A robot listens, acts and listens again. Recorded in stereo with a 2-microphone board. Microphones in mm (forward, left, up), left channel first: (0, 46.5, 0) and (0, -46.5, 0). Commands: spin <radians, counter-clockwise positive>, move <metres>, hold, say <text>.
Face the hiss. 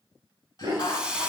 spin -0.52
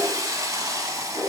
spin -2.44
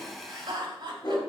say Found it: a hiss, straight ahead.